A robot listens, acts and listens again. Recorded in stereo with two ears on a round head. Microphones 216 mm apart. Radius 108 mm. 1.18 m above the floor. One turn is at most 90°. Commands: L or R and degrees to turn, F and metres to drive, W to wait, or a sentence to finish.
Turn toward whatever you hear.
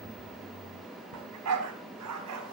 R75
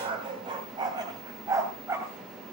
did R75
R10
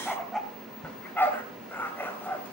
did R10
L10
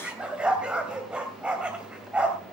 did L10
Facing the dog barking.